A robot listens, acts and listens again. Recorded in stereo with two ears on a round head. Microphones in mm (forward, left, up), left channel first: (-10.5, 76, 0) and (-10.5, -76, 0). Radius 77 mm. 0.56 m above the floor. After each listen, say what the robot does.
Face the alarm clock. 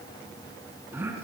Keep listening.
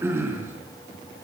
Keep listening.
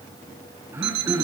Turn 90° right.
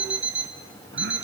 Turn 10° right.
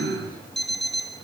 Facing the alarm clock, 2 to 4 m away.